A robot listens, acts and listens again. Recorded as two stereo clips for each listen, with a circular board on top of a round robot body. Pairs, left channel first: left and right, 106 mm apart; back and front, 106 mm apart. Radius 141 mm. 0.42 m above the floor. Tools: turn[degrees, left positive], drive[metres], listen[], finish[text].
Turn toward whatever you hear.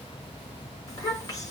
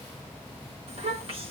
Thought: The child speaking: 35° left.
Action: turn[35]
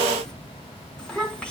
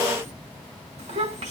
Thought: The child speaking is now 10° left.
Action: turn[10]
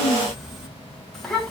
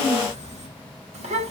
Action: finish[Facing the child speaking.]